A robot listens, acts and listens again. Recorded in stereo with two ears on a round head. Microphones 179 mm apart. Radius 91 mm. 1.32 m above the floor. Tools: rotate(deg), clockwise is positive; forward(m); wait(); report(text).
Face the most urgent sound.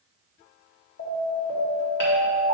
rotate(-75)
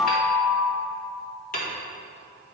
report("Facing the alarm, 2 to 4 m away.")